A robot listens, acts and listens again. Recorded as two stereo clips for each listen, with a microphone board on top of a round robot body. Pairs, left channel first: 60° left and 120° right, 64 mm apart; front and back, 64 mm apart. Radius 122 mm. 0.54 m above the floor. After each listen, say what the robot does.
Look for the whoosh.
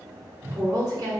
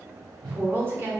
Turn 175° right.
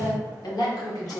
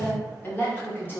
Keep listening.
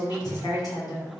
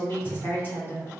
Keep listening.
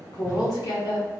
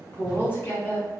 Facing where the whoosh came from. I can't hear it now.